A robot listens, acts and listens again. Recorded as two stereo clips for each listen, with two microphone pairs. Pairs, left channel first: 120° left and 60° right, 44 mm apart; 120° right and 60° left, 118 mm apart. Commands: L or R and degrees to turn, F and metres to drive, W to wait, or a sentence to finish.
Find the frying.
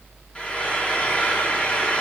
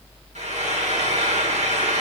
L60
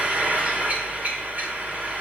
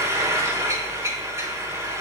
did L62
Facing the frying.